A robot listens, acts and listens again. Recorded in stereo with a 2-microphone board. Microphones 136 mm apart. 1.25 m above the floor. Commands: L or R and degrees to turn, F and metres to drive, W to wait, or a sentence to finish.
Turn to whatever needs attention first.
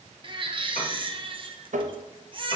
R40
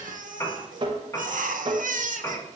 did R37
R105
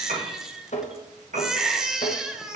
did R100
Facing the baby crying, under 1 m away.